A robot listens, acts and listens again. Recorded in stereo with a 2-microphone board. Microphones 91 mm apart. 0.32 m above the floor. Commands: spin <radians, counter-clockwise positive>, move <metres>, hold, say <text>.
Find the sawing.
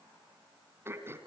hold
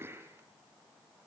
hold
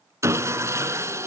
spin -0.52
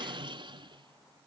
spin -2.09
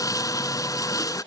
spin 0.70
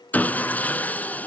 spin 0.35
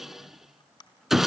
say Found it: sawing, straight ahead.